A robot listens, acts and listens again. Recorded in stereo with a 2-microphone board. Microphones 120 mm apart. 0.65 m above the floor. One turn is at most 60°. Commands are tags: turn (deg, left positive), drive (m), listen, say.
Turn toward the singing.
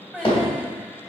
<turn deg="30"/>
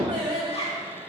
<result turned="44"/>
<turn deg="-40"/>
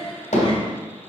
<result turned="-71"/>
<turn deg="25"/>
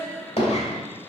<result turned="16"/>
<say>Facing the singing.</say>